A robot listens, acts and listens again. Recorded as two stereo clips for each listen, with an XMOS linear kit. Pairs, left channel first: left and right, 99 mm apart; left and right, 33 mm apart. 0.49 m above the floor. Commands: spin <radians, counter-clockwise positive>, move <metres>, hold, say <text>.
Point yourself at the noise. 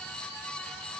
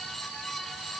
hold
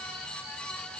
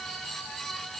hold
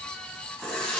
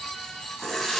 spin 0.52
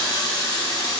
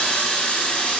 spin 2.36
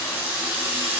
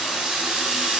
spin -0.44
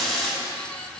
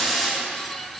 say Facing the running tap, 2 to 4 m away.